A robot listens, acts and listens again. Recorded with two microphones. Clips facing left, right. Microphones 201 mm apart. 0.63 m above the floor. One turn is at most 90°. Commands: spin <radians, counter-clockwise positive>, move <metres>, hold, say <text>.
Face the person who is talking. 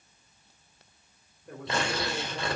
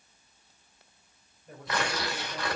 spin 1.05
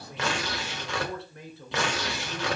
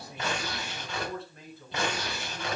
spin 1.13
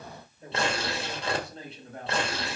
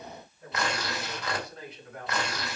spin 0.52
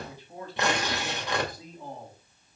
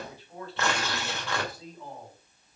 spin 0.26
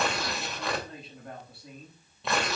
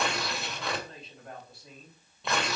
say Found it: a man speaking, straight ahead, over 4 m away.